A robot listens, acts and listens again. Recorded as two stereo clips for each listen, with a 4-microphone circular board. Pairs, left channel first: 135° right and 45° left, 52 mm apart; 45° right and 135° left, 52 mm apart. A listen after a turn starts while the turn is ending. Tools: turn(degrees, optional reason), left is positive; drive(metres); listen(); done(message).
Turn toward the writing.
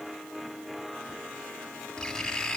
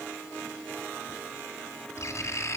turn(degrees=-55, reason="The writing: 55° right.")
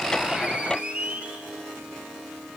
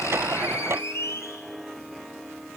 turn(degrees=-15, reason="The writing is now 15° right.")
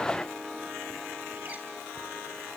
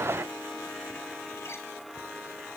listen()
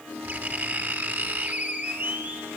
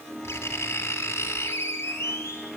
done("Facing the writing.")